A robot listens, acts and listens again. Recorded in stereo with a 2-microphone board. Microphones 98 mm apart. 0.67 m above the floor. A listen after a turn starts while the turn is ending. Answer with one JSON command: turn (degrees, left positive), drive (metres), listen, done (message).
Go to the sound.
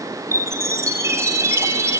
{"turn": -30}
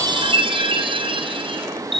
{"turn": -115}
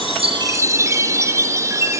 {"turn": -30}
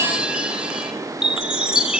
{"drive": 1.0}
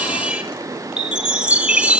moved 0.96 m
{"turn": -10}
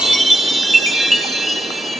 {"drive": 1.0}
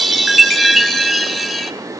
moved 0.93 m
{"drive": 1.0}
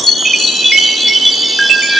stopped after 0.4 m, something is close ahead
{"done": "I am next to the chime."}